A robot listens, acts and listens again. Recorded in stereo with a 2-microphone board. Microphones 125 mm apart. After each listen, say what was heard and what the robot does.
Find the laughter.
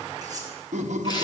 The laughter: about 75° right or 105° right. Turn 75° right.
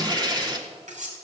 Keep listening.
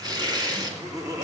So it is at 30° right. Turn 30° right.
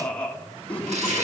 The laughter is now 10° left. Turn 10° left.
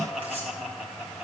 Found it: laughter, straight ahead.